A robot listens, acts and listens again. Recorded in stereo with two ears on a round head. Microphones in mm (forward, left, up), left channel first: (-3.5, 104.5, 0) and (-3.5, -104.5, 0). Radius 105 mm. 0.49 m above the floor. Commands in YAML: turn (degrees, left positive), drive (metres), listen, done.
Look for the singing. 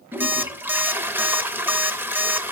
listen: true
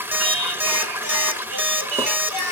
turn: -70
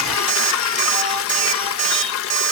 listen: true
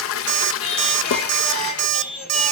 done: "Found it: singing, straight ahead."